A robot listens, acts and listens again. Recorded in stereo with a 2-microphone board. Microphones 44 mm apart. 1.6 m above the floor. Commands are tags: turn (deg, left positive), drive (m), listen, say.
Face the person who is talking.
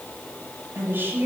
<turn deg="-50"/>
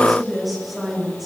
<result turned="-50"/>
<say>Found it: a woman speaking, straight ahead, over 4 m away.</say>